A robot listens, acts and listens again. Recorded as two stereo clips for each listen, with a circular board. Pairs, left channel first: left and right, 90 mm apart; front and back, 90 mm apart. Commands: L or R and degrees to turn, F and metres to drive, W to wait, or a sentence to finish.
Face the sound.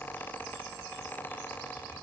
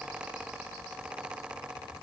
W
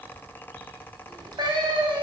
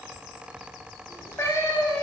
R60
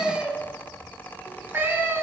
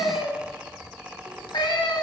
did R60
R30
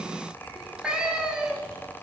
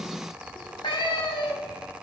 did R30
R10
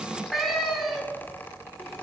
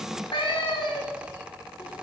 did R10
Facing the cat meowing, 1 to 2 m away.